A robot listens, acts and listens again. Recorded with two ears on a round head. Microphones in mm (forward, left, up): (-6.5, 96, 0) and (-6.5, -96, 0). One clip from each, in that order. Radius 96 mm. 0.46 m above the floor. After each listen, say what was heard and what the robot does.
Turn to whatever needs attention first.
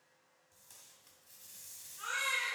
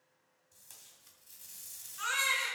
The baby crying: about 65° right or 115° right. Turn 65° right.
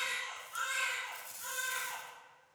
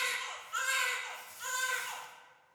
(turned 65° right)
So it is at 50° right. Turn 50° right.
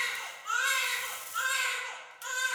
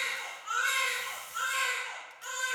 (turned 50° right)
The baby crying is now 20° left. Turn 20° left.
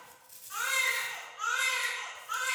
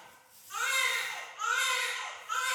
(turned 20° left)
Facing the baby crying.